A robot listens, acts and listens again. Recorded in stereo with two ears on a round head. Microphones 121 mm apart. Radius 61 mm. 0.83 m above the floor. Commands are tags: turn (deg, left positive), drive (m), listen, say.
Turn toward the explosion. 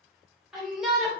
<listen/>
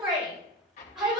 <turn deg="50"/>
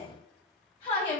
<listen/>
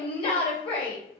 <say>I heard an explosion, but can't make it out now. It was about straight ahead or 80° left.</say>